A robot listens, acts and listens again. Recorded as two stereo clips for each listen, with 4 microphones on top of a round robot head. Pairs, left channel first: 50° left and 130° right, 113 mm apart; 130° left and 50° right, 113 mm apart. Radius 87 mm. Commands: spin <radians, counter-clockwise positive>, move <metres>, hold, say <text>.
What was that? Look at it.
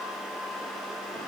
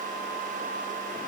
hold
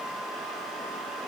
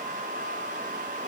hold
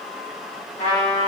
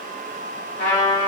spin 2.18
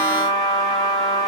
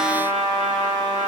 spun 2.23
say Found it: a trumpet, straight ahead, 1 to 2 m away.